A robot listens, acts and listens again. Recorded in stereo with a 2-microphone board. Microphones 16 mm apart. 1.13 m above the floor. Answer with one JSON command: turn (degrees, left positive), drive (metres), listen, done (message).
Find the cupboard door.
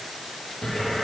{"turn": 65}
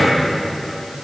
{"turn": 45}
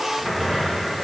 {"turn": -10}
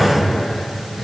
{"done": "Found it: a cupboard door, straight ahead, 1 to 2 m away."}